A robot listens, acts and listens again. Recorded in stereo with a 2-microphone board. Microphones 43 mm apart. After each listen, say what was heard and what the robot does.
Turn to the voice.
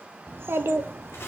The child speaking: about 60° right or 120° right. Turn 60° right.
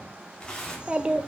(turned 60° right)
So it is at 25° right. Turn 25° right.
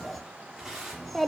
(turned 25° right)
Facing the child speaking.